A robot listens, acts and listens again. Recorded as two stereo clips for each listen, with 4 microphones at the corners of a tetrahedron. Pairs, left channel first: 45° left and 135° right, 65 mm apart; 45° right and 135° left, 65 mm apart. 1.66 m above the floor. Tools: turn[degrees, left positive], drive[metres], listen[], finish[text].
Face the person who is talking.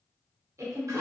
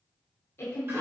Thought: The woman speaking: 95° right.
Action: turn[-95]
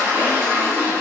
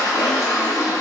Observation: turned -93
Action: listen[]
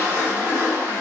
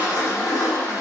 Action: listen[]
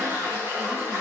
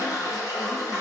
Action: finish[Facing where the woman speaking came from. I can't hear it now.]